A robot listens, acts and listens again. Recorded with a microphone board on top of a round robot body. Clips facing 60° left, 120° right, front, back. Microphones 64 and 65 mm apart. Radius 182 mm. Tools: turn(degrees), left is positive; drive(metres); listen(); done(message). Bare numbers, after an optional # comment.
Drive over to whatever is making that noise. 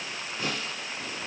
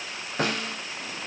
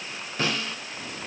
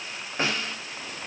# The snare drum: 115° right.
turn(-115)
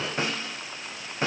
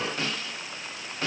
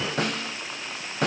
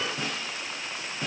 # The snare drum is now 10° right.
turn(-10)
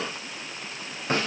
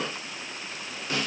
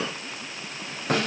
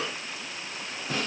drive(1.0)
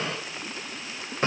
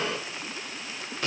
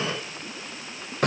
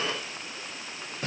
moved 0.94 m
drive(1.0)
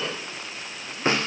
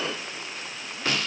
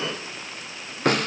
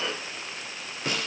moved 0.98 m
drive(1.0)
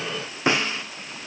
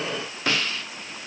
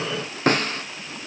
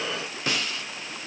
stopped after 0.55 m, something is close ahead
done("I am next to the snare drum.")